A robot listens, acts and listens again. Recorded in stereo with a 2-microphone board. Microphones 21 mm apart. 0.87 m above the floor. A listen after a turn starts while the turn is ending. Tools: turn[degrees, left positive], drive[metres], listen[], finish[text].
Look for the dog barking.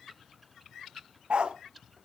Thought: The dog barking: about 65° right or 115° right.
Action: turn[-65]
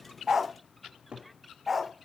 Thought: So it is at 10° right.
Action: turn[-10]
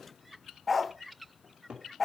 Action: finish[Found it: a dog barking, straight ahead, under 1 m away.]